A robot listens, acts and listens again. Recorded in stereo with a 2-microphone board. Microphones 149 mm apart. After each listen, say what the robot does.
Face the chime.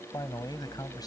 Keep listening.
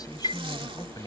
Turn 40° left.
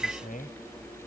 Found it: a chime, straight ahead.